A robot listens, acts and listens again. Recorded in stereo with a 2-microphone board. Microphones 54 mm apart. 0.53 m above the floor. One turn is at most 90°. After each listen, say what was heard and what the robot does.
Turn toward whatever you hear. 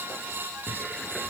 Turn 30° left.
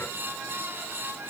Keep listening.
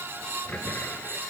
So it is at 145° left. Turn 90° left.
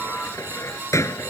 The cupboard door is now 70° left. Turn 70° left.
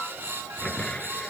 The cupboard door is now 20° left. Turn 20° left.
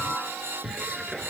Facing the cupboard door.